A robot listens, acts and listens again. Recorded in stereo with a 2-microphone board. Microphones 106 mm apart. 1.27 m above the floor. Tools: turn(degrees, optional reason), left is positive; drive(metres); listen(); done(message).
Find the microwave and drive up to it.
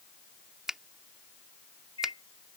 turn(degrees=60, reason="The microwave: about 60° left or 120° left.")
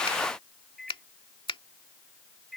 drive(metres=1.0)
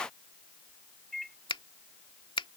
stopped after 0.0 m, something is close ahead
done("Blocked. The microwave is further on, straight ahead.")